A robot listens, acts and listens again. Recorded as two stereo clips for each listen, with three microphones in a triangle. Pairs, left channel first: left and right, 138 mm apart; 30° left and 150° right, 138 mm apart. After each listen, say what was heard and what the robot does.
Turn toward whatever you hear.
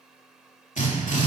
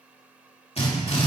The drill: 70° left. Turn 70° left.
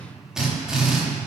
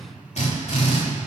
Found it: a drill, straight ahead.